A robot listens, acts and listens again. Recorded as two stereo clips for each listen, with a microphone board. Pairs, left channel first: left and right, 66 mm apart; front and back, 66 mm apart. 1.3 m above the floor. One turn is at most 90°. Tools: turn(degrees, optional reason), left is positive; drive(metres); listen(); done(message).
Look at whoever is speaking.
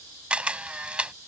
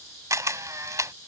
listen()
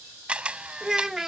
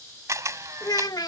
done("Facing the child speaking.")